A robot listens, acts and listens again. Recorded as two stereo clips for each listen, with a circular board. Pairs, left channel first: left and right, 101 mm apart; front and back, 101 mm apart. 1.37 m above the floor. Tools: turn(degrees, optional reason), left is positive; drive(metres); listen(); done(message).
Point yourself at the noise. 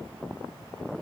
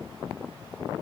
listen()
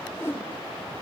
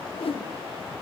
turn(degrees=25, reason="The whoosh: 25° left.")
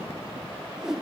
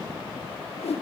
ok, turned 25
done("Found it: a whoosh, straight ahead, 1 to 2 m away.")